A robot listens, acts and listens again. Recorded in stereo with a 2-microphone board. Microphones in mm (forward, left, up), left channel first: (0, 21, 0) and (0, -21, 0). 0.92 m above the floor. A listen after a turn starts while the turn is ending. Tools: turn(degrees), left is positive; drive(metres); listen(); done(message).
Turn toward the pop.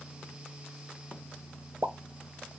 turn(degrees=-90)
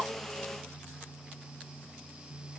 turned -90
done("Facing where the pop came from. I can't hear it now.")